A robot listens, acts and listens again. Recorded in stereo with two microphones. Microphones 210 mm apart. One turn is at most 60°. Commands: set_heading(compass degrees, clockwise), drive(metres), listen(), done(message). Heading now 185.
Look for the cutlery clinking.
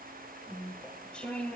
listen()
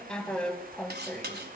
set_heading(240)
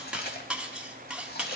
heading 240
done("Facing the cutlery clinking, 1 to 2 m away.")